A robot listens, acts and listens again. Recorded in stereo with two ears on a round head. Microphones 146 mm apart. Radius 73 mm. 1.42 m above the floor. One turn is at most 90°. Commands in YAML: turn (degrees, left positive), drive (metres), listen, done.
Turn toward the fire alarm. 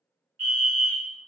turn: -45
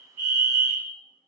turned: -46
turn: -15
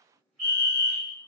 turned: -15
done: "Facing the fire alarm, 1 to 2 m away."